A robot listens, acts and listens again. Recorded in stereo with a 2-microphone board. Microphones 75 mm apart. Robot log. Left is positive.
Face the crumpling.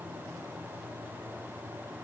cmd idle
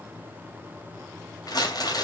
note: The crumpling: about 60° left or 120° left.
cmd yaw +60
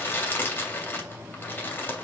note: So it is at 35° left.
cmd yaw +35
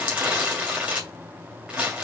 note: The crumpling is now 20° right.
cmd yaw -20
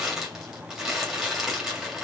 end: Facing the crumpling, 2 to 4 m away.